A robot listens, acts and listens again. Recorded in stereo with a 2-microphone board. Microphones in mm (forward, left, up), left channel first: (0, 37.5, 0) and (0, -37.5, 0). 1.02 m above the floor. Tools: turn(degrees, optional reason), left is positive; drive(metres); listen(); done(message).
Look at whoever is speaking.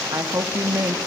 turn(degrees=-45, reason="The woman speaking: about 45° right or 135° right.")
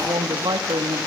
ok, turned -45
turn(degrees=-85, reason="So it is at 85° right.")
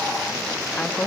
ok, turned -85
turn(degrees=20, reason="The woman speaking is now 20° left.")
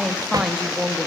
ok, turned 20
done("Facing the woman speaking.")